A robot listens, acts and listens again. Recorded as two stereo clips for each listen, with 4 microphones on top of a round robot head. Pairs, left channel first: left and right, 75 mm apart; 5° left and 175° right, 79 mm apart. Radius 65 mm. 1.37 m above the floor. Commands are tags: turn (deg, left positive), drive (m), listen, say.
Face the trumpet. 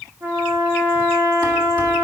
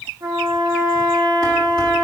<turn deg="-145"/>
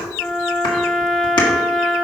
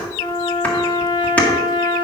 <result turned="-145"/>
<say>Facing the trumpet.</say>